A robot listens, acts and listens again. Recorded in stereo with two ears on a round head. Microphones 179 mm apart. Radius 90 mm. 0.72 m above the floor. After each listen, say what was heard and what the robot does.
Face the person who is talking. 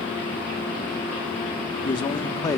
The man speaking: about 15° left or 165° left. Turn 15° left.
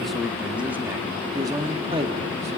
So it is at 30° right. Turn 30° right.
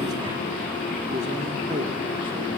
Keep listening.
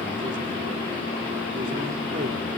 Keep listening.
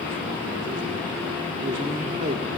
The man speaking is now 40° right. Turn 40° right.
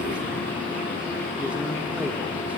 Found it: a man speaking, straight ahead, 2 to 4 m away.